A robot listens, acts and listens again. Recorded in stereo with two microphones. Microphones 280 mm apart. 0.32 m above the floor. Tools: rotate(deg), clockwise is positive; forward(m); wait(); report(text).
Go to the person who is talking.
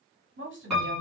rotate(45)
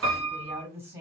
rotate(10)
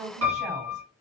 forward(1.0)
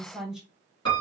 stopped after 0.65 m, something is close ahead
report("Arrived at the woman speaking, straight ahead.")